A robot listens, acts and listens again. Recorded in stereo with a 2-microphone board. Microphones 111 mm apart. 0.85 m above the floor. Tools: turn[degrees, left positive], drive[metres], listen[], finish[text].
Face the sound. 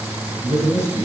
Thought: The man speaking: about 35° right or 145° right.
Action: turn[-35]
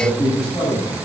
Action: finish[Facing the man speaking, over 4 m away.]